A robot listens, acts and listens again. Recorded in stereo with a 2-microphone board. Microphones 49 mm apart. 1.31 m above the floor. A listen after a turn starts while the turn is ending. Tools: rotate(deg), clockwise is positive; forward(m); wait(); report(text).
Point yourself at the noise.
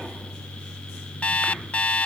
rotate(-30)
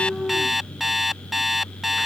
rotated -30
report("Found it: an alarm clock, straight ahead.")